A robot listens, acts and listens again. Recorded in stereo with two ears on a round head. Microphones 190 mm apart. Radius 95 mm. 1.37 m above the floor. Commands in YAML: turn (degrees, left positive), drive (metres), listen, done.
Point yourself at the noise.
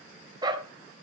turn: -20
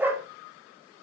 turn: -30
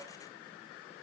listen: true
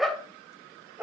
turn: -30
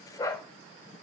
turn: 15
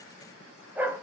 turn: -10
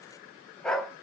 done: "Found it: a dog barking, straight ahead, 2 to 4 m away."